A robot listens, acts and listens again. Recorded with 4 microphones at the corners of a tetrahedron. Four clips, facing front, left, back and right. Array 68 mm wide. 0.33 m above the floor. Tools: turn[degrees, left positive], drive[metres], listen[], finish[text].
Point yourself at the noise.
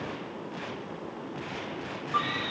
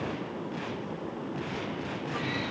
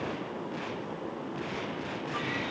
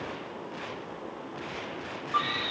Thought: The scream: 50° right.
Action: turn[-50]
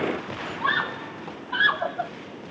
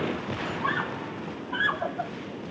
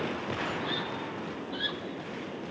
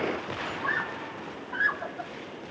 Thought: The scream is now 15° left.
Action: turn[15]
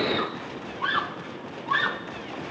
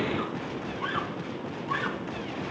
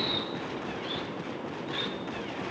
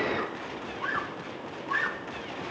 Action: finish[Facing the scream.]